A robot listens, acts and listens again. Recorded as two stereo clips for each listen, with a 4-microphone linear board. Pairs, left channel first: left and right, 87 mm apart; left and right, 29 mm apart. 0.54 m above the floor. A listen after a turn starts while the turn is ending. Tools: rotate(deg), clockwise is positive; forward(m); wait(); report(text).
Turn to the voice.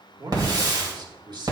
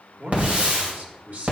rotate(55)
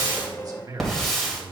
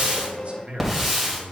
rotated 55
rotate(55)
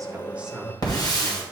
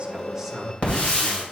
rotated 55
report("Found it: a man speaking, straight ahead, 1 to 2 m away.")